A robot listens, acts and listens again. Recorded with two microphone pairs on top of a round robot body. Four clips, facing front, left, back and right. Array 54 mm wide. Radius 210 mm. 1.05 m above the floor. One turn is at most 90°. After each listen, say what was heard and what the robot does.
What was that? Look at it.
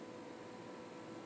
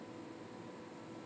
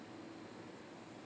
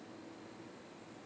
Keep listening.
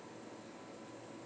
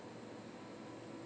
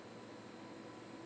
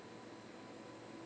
Keep listening.
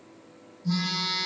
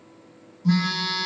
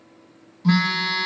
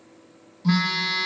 The phone buzzing: 150° right. Turn 90° right.
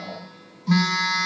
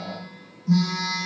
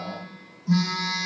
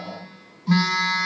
The phone buzzing is now 55° right. Turn 55° right.
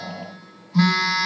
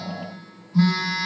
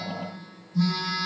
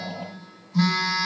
Facing the phone buzzing.